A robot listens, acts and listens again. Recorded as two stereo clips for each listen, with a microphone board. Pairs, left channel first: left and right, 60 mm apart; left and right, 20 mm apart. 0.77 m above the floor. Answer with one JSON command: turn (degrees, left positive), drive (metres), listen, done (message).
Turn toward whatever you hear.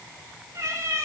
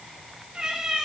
{"turn": -50}
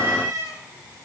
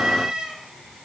{"turn": -75}
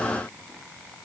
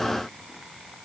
{"listen": true}
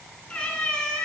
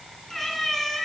{"turn": 15}
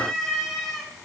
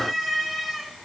{"done": "Facing the cat meowing."}